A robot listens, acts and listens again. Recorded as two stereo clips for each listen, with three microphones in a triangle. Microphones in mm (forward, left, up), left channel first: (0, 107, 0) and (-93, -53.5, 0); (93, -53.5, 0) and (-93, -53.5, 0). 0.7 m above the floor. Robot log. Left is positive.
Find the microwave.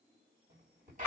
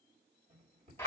note: The microwave: 140° right.
cmd yaw -140
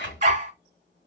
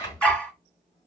cmd idle
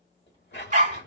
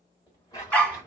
cmd idle
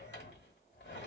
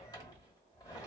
end: Facing where the microwave came from. I can't hear it now.